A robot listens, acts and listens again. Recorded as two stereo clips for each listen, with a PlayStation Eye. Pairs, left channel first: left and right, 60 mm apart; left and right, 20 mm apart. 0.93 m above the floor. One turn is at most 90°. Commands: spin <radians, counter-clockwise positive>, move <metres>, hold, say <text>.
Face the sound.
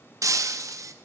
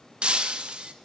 spin -1.05
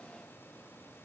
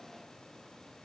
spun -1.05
hold
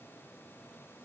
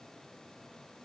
say I heard breaking glass, but can't make it out now. It was about straight ahead or 60° right.